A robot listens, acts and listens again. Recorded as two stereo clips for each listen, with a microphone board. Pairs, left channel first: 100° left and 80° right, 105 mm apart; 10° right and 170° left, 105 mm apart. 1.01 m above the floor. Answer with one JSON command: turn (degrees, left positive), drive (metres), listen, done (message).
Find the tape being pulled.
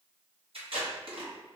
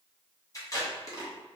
{"turn": -65}
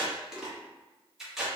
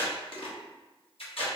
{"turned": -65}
{"done": "Facing the tape being pulled."}